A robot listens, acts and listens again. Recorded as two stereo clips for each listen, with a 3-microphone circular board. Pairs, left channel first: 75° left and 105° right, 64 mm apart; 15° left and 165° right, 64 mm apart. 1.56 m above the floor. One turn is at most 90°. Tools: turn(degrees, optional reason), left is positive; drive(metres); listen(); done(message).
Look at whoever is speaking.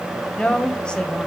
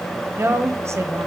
turn(degrees=90, reason="The woman speaking: 150° left.")
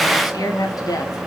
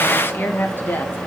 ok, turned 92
turn(degrees=70, reason="The woman speaking is now 70° left.")
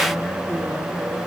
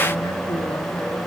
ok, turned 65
listen()
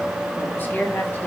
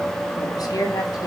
turn(degrees=15, reason="The woman speaking is now 15° left.")
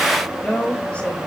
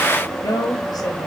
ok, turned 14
done("Found it: a woman speaking, straight ahead.")